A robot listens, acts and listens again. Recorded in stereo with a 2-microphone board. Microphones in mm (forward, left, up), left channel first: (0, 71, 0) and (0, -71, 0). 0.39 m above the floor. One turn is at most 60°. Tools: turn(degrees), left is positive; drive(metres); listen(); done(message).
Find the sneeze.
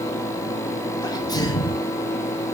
turn(degrees=25)
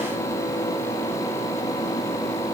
listen()
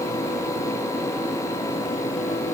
done("I heard a sneeze, but can't make it out now. It was about straight ahead or 130° left.")